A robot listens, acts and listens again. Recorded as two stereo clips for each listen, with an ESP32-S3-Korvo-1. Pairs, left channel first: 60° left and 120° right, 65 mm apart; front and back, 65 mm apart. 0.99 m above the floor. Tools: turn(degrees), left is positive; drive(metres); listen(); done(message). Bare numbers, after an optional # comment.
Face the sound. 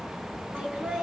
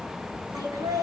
# The laughter: 175° left.
turn(175)
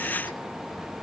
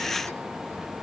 listen()
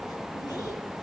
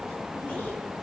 listen()
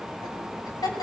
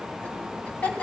# The laughter is now 70° left.
turn(70)
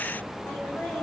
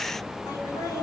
done("Facing the laughter.")